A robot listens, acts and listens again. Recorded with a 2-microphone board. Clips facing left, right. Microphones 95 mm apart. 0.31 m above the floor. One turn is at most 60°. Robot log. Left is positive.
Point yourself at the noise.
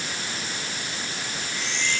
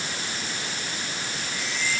cmd yaw -30
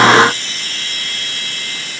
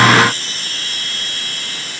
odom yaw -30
note: So it is at 145° right.
cmd yaw -60
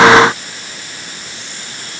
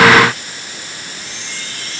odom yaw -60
note: The chime is now 95° right.
cmd yaw -60
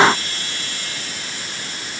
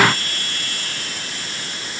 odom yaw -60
note: The chime is now 45° right.
cmd yaw -45
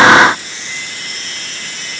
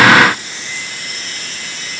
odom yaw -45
end: Found it: a chime, straight ahead.